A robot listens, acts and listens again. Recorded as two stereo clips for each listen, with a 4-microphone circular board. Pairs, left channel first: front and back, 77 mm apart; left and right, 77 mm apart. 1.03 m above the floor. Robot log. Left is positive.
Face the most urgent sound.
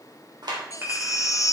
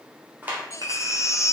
note: The baby crying: 45° left.
cmd yaw +45
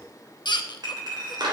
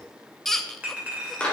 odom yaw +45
end: Found it: a baby crying, straight ahead, under 1 m away.